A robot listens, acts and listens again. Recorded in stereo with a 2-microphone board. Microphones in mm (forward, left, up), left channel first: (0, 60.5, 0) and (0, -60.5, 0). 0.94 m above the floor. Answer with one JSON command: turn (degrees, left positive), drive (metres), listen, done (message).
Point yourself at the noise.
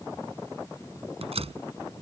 {"turn": -55}
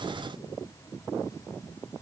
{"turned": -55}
{"listen": true}
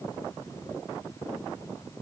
{"done": "I heard a door slam, but can't make it out now. It was about straight ahead or 70° right."}